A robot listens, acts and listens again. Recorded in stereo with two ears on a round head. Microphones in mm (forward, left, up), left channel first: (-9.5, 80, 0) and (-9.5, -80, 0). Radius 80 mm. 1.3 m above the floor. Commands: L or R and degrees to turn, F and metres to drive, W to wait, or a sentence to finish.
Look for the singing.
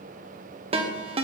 W
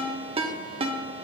W
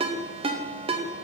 I can't make out singing to turn to.